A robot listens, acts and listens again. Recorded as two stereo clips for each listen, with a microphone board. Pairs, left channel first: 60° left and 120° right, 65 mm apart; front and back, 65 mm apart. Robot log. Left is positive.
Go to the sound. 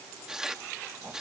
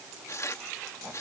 note: The tearing paper: 40° right.
cmd yaw -40
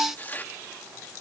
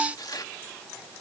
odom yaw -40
cmd fwd 1.0
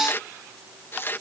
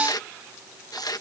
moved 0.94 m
cmd fwd 1.0
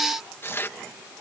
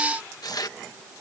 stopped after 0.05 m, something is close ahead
note: The tearing paper is now 10° left.
cmd yaw +10
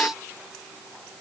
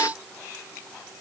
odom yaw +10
cmd idle
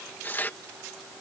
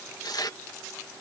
end: I am next to the tearing paper.